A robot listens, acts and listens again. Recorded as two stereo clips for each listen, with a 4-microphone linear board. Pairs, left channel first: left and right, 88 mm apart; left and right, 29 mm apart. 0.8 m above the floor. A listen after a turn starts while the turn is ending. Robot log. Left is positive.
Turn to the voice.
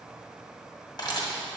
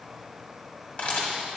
cmd idle
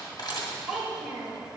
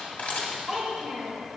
cmd yaw -30
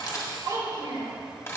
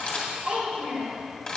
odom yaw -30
note: So it is at 145° right.
cmd yaw -145
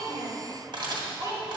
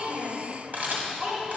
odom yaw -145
note: The child speaking is now 45° right.
cmd yaw -45
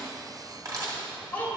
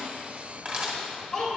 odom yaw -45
note: The child speaking is now 20° left.
cmd yaw +20
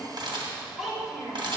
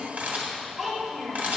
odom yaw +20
end: Found it: a child speaking, straight ahead.